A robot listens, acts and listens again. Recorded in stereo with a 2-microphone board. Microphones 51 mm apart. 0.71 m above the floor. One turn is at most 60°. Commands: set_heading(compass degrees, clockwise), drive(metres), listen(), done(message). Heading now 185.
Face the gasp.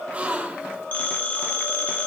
set_heading(210)
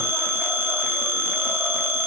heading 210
listen()
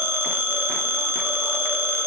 done("I heard a gasp, but can't make it out now. It was about straight ahead or 130° right.")